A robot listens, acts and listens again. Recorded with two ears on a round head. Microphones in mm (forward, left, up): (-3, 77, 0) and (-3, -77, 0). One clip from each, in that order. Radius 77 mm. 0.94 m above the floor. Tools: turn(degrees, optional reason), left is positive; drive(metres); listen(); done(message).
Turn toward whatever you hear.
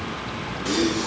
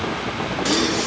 turn(degrees=-70, reason="The gasp: about 70° right or 110° right.")
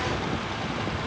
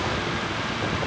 listen()
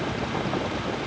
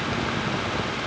done("I heard a gasp, but can't make it out now. It was about straight ahead or 40° right.")